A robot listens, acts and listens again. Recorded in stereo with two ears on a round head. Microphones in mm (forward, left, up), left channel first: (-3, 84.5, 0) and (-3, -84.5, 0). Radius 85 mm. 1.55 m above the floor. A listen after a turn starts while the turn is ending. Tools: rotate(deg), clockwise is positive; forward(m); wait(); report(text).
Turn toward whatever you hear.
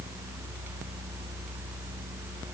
wait()
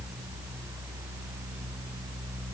wait()
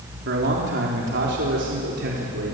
rotate(65)
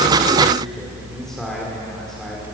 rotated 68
wait()
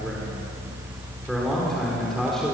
report("Found it: a man speaking, straight ahead.")